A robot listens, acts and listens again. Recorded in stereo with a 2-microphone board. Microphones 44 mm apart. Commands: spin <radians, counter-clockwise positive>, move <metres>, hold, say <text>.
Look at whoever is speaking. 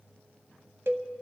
hold
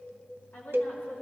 spin 0.87
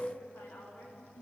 spin 1.31
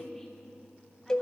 say Facing the woman speaking, over 4 m away.